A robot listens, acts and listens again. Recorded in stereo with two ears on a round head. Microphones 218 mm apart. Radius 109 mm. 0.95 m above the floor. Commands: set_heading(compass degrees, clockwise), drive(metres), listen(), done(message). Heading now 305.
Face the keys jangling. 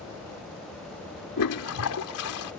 listen()
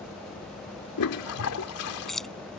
set_heading(275)
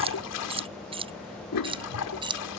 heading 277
set_heading(297)
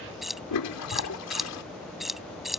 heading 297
done("Facing the keys jangling.")